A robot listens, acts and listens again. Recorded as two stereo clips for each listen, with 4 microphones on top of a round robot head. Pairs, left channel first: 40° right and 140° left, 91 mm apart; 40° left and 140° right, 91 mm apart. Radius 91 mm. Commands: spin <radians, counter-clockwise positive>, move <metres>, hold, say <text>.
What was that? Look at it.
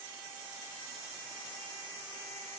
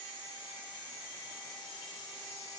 hold
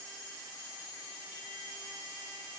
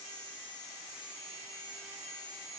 hold
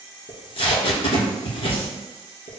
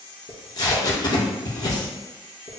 spin -0.17
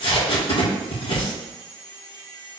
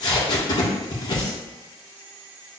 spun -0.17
say Found it: tape being pulled, straight ahead.